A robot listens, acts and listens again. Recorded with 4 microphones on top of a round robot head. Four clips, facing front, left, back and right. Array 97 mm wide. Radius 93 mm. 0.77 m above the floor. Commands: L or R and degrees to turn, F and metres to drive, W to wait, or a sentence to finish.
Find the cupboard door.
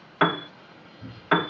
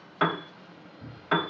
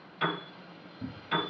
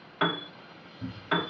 R155
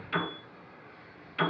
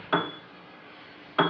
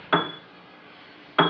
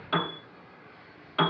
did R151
W
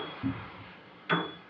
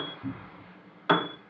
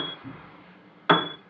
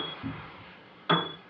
Facing the cupboard door, 1 to 2 m away.